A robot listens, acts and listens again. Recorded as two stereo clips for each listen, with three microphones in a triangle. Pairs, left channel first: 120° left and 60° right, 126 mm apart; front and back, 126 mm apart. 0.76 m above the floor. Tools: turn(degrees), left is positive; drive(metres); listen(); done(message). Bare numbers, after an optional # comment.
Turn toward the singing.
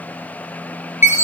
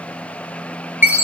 listen()
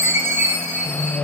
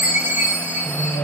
# The singing: 75° left.
turn(75)
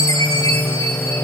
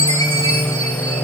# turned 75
# The singing is now 40° left.
turn(40)
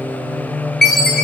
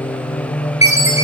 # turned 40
# The singing is now 20° left.
turn(20)
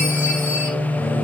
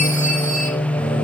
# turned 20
# The singing is now 10° left.
turn(10)
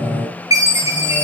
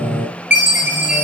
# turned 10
done("Found it: singing, straight ahead, over 4 m away.")